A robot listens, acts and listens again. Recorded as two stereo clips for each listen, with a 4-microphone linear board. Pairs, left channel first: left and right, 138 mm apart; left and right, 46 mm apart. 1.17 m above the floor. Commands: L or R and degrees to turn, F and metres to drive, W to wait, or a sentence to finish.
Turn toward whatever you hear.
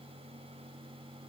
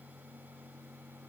W
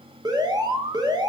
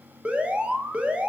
R25
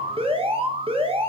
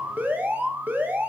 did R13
R140
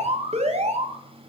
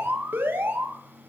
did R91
R50
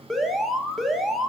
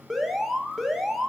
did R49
Facing the alarm, under 1 m away.